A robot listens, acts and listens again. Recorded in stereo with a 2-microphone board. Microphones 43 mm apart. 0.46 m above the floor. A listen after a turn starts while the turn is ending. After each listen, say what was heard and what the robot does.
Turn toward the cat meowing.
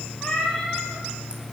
The cat meowing: about 20° left or 160° left. Turn 20° left.
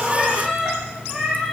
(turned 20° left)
Facing the cat meowing, over 4 m away.